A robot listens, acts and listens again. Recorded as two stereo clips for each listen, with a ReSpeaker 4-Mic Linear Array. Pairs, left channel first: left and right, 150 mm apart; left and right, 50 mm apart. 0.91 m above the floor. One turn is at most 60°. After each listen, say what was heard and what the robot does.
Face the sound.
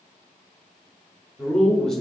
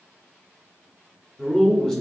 Turn 30° left.
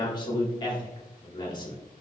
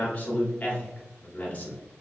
So it is at 150° left. Turn 60° left.
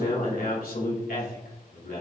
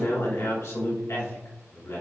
The man speaking is now 90° left. Turn 60° left.
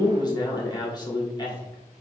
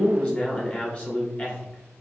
The man speaking is now 30° left. Turn 30° left.
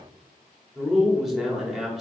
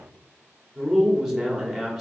Facing the man speaking, 2 to 4 m away.